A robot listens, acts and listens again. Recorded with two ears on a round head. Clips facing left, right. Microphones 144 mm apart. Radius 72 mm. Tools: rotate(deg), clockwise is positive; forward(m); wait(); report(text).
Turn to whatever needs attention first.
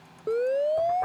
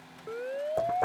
rotate(-50)
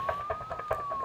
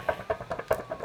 rotate(-80)
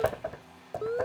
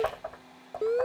rotate(25)
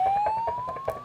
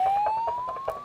report("Found it: a siren, straight ahead.")